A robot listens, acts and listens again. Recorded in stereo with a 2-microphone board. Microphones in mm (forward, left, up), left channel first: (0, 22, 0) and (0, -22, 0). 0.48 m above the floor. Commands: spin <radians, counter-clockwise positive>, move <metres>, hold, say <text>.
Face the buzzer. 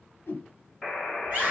spin -0.52
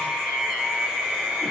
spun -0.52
hold
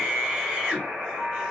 spin -2.62
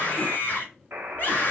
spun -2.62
spin -1.22
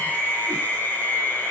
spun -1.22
hold
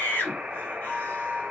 spin -0.44
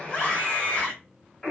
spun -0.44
spin 0.17
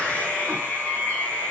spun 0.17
hold
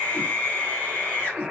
say Facing the buzzer, 1 to 2 m away.